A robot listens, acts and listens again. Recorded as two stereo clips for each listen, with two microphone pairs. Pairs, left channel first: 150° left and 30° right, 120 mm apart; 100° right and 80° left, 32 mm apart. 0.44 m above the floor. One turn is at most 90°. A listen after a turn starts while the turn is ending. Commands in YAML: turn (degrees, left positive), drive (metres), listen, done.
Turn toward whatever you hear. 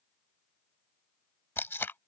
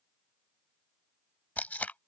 turn: -90
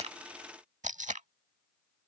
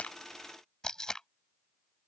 turn: -30
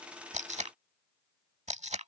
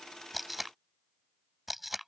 done: "Facing the tape being pulled."